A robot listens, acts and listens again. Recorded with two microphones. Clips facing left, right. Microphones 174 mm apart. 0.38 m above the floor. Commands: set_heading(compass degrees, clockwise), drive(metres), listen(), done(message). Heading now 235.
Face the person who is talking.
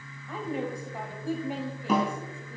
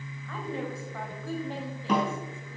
set_heading(205)
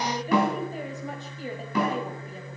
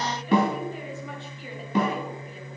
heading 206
set_heading(76)
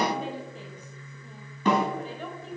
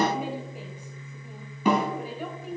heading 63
set_heading(73)
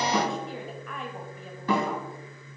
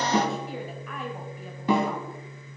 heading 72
done("Found it: a woman speaking, straight ahead, 1 to 2 m away.")